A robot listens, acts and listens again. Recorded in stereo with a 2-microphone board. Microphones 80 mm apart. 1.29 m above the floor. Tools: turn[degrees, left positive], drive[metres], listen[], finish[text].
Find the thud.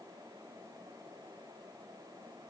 Action: listen[]
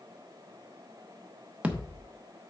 Action: turn[-30]
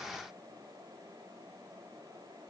Action: listen[]
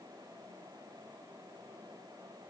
Action: finish[I heard a thud, but can't make it out now. It was about 15° left or 135° right.]